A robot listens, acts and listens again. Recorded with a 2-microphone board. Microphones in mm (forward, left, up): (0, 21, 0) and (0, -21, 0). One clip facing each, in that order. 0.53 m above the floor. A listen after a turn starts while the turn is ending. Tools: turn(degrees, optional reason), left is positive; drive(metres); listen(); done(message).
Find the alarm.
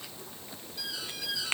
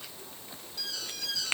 turn(degrees=30)
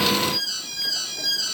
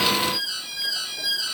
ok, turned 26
turn(degrees=-10, reason="So it is at 10° right.")
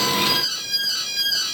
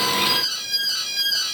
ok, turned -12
done("Found it: an alarm, straight ahead.")